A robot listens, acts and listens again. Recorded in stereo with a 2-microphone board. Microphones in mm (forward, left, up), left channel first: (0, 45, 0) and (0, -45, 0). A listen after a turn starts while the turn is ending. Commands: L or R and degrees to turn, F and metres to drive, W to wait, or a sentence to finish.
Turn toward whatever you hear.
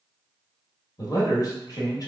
L50
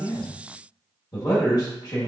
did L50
L65
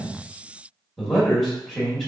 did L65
Found it: a man speaking, straight ahead, 1 to 2 m away.